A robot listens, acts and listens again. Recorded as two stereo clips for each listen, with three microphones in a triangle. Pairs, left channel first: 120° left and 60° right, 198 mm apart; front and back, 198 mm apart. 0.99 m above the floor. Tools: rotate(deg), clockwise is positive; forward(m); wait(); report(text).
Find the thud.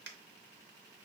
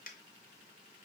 wait()
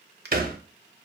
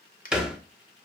rotate(95)
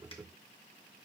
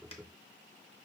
report("I heard a thud from this way, but can't make it out now.")